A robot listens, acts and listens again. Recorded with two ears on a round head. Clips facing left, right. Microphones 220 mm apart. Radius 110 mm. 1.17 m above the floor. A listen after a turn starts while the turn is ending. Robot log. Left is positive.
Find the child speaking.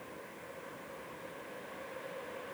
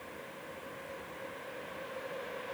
cmd idle
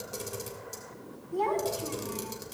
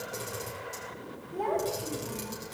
note: The child speaking: about 60° left or 120° left.
cmd yaw +60
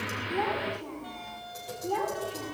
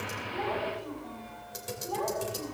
note: So it is at 60° left.
cmd yaw +60
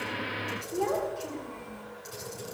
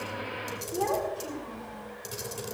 end: Found it: a child speaking, straight ahead, over 4 m away.